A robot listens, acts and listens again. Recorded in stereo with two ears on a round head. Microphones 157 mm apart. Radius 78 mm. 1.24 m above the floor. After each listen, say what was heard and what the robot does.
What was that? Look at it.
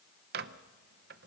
The microwave: about 60° right or 120° right. Turn 60° right.
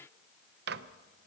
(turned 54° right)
So it is at 65° right. Turn 65° right.
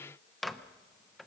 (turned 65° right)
Found it: a microwave, straight ahead.